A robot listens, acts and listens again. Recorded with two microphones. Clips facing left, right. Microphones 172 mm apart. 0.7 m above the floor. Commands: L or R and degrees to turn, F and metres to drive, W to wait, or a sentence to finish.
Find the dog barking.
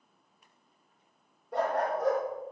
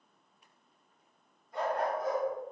L70
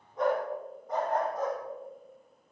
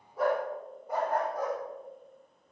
R15
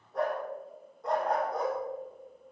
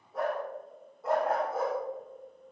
Found it: a dog barking, straight ahead.